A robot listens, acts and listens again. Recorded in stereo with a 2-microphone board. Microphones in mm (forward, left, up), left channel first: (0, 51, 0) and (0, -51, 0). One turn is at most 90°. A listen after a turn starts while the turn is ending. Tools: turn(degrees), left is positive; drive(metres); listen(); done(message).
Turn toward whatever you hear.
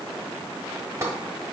turn(degrees=-30)
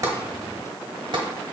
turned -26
turn(degrees=-90)
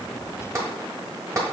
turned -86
turn(degrees=-30)
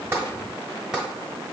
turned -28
done("Found it: tapping, straight ahead.")